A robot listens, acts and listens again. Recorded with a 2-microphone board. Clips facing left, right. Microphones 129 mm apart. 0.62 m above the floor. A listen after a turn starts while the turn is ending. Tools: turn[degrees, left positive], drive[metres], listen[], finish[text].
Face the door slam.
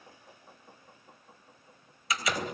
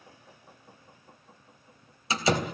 Thought: The door slam: about 30° right or 150° right.
Action: turn[-30]
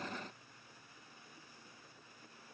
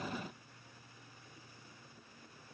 Action: listen[]
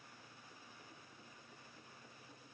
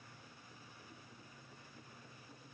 Action: finish[I heard a door slam, but can't make it out now. It was about straight ahead or 120° right.]